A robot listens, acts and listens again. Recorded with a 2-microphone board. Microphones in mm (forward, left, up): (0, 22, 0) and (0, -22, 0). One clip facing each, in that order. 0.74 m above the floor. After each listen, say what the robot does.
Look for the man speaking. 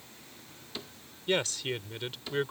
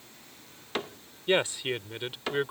Turn 30° right.
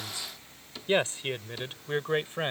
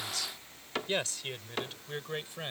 Turn 40° left.
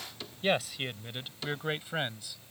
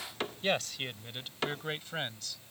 Turn 10° left.
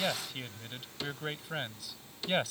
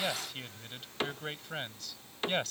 Found it: a man speaking, straight ahead.